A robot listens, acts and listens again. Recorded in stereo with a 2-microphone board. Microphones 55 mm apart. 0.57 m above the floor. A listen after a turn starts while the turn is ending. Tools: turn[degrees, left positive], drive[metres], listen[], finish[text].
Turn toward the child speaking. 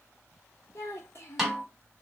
Thought: The child speaking: about 55° left or 125° left.
Action: turn[55]
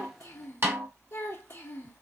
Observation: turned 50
Thought: So it is at 60° left.
Action: turn[60]
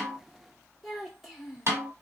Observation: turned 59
Action: finish[Found it: a child speaking, straight ahead.]